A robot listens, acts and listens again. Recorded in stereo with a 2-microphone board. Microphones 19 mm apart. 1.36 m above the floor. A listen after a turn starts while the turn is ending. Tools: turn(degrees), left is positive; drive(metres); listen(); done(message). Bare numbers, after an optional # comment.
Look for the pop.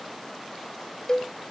listen()
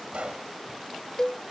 turn(-90)
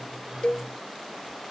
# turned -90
done("I heard a pop from this way, but can't make it out now.")